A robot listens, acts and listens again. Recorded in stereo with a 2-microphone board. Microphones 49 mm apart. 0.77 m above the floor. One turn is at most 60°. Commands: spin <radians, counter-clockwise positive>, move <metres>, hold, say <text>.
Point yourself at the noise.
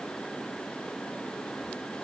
hold
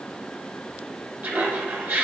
spin -0.87
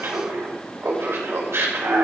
spin -1.05
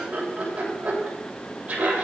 spin -0.52
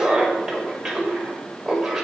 spin -0.17
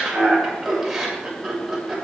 say Found it: laughter, straight ahead.